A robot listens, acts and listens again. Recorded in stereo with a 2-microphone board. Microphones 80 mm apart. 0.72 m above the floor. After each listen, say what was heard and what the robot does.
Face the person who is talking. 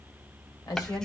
The woman speaking: about 55° left or 125° left. Turn 55° left.
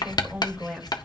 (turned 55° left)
Facing the woman speaking.